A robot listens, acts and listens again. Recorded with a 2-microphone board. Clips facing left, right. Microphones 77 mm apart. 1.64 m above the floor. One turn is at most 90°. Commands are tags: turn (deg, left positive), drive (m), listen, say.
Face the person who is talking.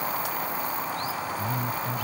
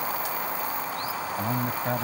<turn deg="-75"/>
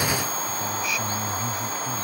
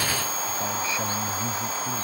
<turn deg="-30"/>
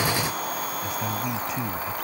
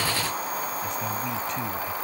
<listen/>
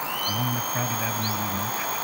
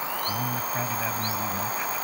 <say>Facing the man speaking.</say>